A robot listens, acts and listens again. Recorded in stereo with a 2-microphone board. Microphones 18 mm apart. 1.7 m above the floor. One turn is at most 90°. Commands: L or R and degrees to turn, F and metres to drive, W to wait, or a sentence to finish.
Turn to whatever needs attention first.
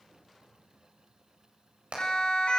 L65
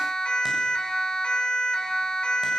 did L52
L65
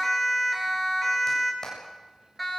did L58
Facing the siren, over 4 m away.